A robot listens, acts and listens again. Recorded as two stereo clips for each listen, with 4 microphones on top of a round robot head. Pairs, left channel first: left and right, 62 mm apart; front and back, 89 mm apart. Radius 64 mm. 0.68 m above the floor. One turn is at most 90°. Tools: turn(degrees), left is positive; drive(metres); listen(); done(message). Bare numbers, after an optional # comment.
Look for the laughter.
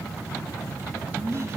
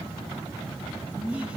# The laughter: 110° right.
turn(-90)
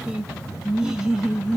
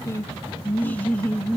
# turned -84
# The laughter is now 35° right.
turn(-35)
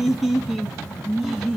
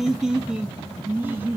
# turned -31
# The laughter is now 170° right.
turn(-90)
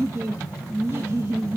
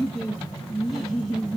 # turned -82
# The laughter is now 90° right.
turn(-90)
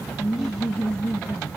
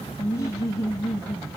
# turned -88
done("Found it: laughter, straight ahead, 1 to 2 m away.")